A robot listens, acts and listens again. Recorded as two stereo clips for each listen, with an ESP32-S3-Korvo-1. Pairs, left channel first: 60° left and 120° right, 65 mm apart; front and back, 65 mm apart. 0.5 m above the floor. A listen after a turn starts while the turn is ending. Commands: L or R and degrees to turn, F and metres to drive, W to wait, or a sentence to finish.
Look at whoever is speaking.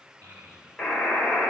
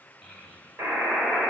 R80
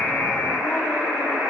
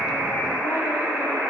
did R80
W
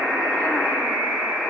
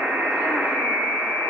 W
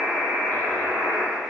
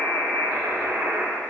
Facing where the child speaking came from. I can't hear it now.